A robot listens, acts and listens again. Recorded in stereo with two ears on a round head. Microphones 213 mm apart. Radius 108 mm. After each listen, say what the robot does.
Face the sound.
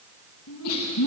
Turn 90° left.
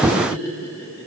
Turn 10° left.
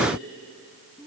Found it: laughter, straight ahead, over 4 m away.